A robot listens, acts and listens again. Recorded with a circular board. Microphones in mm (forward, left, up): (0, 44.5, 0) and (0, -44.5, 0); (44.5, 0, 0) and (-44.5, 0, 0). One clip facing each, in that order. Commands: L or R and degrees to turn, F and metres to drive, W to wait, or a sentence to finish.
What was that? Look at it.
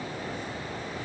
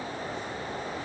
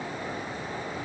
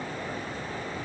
W
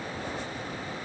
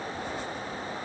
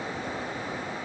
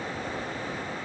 W
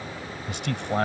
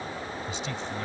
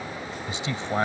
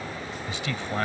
L65
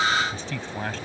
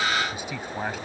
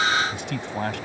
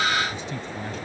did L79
R10
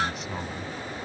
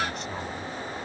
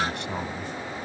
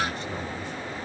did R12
W
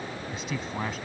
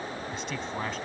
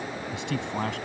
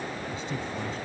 Facing the man speaking.